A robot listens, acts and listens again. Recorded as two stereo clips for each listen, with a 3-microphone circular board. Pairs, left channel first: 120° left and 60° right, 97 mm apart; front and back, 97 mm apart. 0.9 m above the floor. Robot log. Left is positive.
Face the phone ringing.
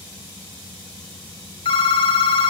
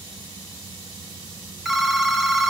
note: The phone ringing: 95° left.
cmd yaw +95
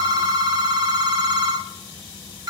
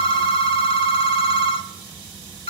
note: The phone ringing is now 15° right.
cmd yaw -15
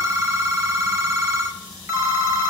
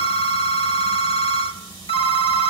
end: Found it: a phone ringing, straight ahead.